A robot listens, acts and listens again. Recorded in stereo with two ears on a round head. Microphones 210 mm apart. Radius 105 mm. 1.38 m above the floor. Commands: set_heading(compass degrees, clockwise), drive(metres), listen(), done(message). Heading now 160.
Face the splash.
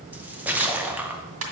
set_heading(190)
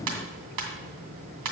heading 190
listen()
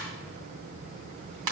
done("I heard a splash, but can't make it out now. It was about 25° left or 145° right.")